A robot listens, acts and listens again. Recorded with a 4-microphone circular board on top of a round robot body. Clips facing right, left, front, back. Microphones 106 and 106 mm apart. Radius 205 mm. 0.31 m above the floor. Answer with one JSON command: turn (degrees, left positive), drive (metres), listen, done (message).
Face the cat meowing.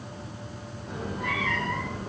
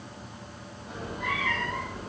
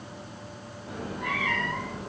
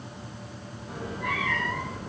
{"turn": 10}
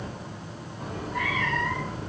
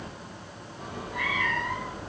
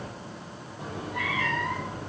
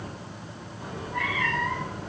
{"turn": 10}
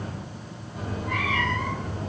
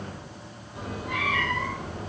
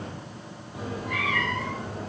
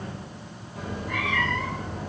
{"turn": 15}
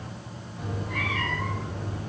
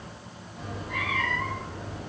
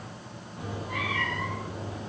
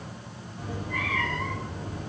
{"done": "Found it: a cat meowing, straight ahead, 2 to 4 m away."}